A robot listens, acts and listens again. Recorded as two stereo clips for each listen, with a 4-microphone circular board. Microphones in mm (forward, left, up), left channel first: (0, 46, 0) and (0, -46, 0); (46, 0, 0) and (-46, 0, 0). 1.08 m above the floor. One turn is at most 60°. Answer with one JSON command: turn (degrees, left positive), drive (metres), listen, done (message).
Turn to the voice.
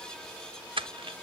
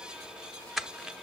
{"listen": true}
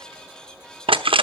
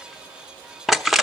{"listen": true}
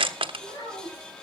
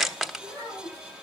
{"turn": 60}
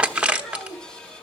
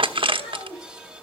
{"done": "Found it: a child speaking, straight ahead, over 4 m away."}